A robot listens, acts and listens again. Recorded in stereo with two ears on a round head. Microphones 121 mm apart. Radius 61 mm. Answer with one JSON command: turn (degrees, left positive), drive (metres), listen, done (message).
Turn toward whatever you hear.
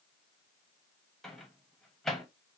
{"turn": 30}
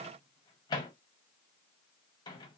{"turn": 145}
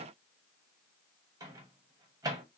{"turn": -25}
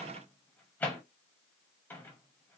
{"turn": 15}
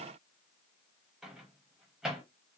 {"done": "Found it: a microwave, straight ahead, under 1 m away."}